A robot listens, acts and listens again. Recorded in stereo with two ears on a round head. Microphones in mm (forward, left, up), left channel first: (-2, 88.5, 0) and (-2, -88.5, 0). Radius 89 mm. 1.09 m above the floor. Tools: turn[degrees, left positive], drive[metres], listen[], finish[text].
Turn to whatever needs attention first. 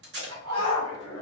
Thought: The shout: about 25° left or 155° left.
Action: turn[25]
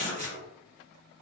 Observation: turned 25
Action: listen[]
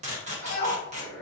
Thought: So it is at 130° left.
Action: turn[130]
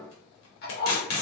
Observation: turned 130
Action: listen[]
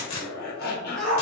Action: finish[Facing the shout, under 1 m away.]